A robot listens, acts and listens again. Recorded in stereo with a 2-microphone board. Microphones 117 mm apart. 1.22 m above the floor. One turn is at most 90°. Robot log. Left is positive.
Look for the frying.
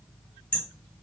cmd idle
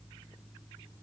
cmd idle
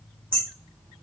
end: I can't make out frying, only hammering.